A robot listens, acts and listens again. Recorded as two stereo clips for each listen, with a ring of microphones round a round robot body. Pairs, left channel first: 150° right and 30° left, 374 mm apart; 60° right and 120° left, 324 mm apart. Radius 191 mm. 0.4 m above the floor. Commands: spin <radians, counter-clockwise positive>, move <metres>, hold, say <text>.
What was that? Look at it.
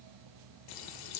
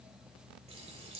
spin -2.97
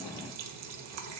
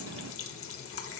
spin -0.26
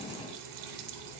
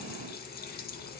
say Facing the running tap, under 1 m away.